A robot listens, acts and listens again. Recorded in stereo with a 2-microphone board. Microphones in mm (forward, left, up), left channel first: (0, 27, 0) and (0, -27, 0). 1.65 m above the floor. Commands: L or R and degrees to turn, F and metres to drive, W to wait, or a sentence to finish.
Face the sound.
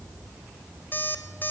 L40
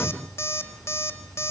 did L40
L95
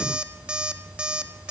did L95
R20
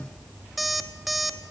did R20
Found it: an alarm clock, straight ahead, 1 to 2 m away.